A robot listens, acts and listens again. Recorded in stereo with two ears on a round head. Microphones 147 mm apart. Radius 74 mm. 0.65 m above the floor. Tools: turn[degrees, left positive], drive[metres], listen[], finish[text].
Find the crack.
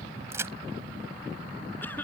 Thought: The crack: about 15° right or 165° right.
Action: turn[-15]
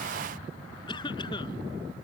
Action: listen[]
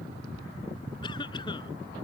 Action: finish[I heard a crack, but can't make it out now. It was about straight ahead or 150° right.]